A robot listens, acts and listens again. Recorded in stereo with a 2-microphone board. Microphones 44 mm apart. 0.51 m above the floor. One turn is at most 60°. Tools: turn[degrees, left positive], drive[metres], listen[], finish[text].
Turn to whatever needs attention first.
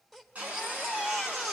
Action: turn[-30]
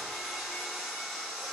Action: listen[]
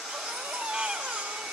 Thought: So it is at 145° right.
Action: turn[-60]
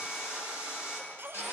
Thought: The baby crying is now 75° right.
Action: turn[-60]
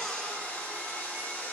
Thought: Nothing new. It was at 15° right.
Action: turn[-15]
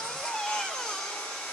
Thought: The baby crying is now 20° left.
Action: turn[20]
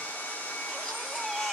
Action: finish[Found it: a baby crying, straight ahead, 1 to 2 m away.]